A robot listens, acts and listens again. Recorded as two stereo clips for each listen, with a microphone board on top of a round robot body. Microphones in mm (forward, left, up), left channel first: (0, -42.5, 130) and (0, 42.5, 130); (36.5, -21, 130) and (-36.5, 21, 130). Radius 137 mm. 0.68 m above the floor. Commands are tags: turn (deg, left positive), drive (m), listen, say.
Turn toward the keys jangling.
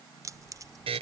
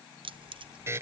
<turn deg="140"/>
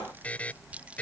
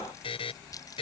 <turn deg="15"/>
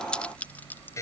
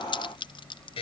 <turn deg="-20"/>
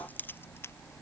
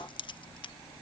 <turn deg="-30"/>
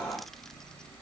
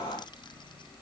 <say>Found it: keys jangling, straight ahead.</say>